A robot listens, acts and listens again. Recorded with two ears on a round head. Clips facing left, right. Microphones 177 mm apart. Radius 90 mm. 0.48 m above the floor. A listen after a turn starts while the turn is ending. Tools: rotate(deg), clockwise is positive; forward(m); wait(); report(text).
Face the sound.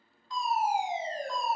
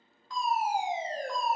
rotate(50)
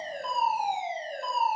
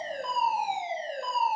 rotate(65)
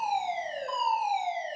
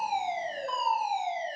report("Facing the fire alarm.")